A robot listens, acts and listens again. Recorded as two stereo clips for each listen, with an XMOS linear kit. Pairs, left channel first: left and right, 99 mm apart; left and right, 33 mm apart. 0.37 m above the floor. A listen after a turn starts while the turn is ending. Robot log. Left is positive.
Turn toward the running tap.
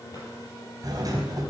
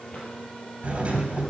cmd idle
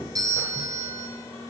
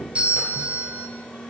cmd idle
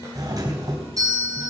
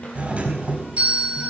end: I can't make out a running tap to turn to.